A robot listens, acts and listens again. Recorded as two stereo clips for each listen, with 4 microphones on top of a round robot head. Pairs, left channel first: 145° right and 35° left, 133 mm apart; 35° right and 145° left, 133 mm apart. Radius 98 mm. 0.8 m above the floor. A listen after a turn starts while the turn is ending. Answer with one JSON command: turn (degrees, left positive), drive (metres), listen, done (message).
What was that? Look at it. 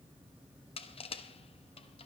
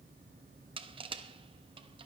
{"turn": -175}
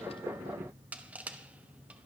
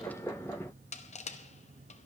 {"turn": -45}
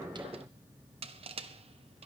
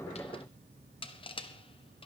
{"done": "Facing the crushing, 1 to 2 m away."}